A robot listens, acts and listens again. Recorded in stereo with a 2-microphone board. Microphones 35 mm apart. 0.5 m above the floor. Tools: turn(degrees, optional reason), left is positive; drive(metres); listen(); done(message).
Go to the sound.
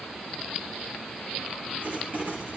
turn(degrees=-70, reason="The writing: about 70° right or 110° right.")
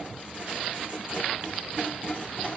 turn(degrees=-40, reason="So it is at 40° right.")
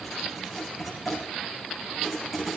drive(metres=1.0)
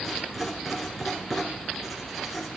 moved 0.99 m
drive(metres=1.0)
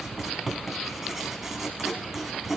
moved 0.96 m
turn(degrees=-10, reason="The writing is now 10° right.")
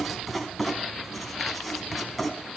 drive(metres=1.0)
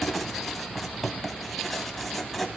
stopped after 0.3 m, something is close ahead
done("Arrived at the writing, straight ahead.")